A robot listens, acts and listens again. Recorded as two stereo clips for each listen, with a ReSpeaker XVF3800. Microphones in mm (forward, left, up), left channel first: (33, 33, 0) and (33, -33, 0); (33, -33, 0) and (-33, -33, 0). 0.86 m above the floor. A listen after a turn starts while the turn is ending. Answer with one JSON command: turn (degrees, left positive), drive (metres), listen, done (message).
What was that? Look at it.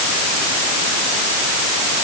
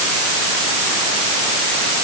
{"listen": true}
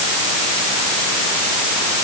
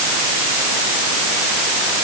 {"listen": true}
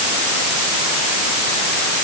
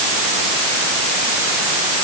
{"done": "I can't make out anything to turn to."}